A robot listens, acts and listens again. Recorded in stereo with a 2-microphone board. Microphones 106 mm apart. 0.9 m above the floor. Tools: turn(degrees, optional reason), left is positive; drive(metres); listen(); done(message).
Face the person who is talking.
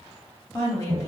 turn(degrees=25, reason="The woman speaking: about 25° left or 155° left.")
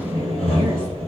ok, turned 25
listen()
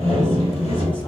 listen()
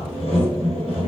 done("I heard a woman speaking, but can't make it out now. It was about straight ahead or 130° left.")